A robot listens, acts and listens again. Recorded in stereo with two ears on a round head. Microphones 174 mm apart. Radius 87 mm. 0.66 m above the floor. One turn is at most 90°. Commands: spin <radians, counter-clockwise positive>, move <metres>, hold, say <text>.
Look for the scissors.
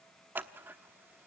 spin -0.52
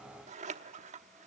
spin -1.57
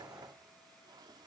spin -0.79
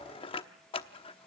spin 0.52
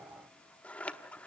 spin 0.17
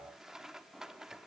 say Found it: scissors, straight ahead, under 1 m away.